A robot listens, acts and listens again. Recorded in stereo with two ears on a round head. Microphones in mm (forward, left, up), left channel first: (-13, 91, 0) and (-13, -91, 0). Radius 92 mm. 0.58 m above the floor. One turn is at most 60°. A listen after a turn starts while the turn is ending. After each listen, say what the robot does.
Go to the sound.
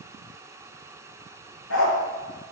Turn 60° left.
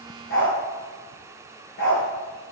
Turn 45° left.
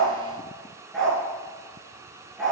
Drive 1.0 m forward.
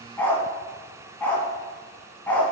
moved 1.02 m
Turn 10° left.
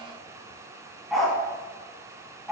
Drive 1.0 m forward.
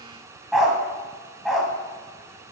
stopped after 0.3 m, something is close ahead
I am next to the dog barking.